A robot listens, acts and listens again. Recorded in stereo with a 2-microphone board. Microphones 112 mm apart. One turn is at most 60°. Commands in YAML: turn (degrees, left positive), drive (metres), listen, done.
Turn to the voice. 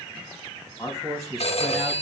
turn: 30
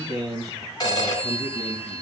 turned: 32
turn: -30
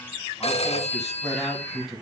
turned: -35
done: "Facing the man speaking, over 4 m away."